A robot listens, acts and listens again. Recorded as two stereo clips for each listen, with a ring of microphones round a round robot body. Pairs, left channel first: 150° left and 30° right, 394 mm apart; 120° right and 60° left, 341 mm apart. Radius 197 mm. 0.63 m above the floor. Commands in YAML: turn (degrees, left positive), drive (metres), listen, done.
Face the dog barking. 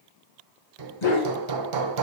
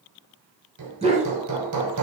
turn: 130
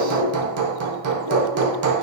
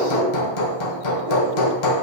listen: true
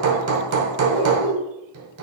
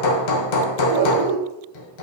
done: "Found it: a dog barking, straight ahead."